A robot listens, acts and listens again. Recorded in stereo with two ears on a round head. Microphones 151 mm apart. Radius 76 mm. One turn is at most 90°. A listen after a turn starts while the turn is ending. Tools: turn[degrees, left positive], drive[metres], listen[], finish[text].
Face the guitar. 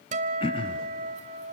Thought: The guitar: about 50° right or 130° right.
Action: turn[-50]
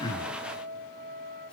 Thought: So it is at 75° right.
Action: turn[-75]
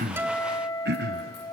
Thought: The guitar is now 25° left.
Action: turn[25]
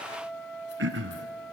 Action: finish[Found it: a guitar, straight ahead.]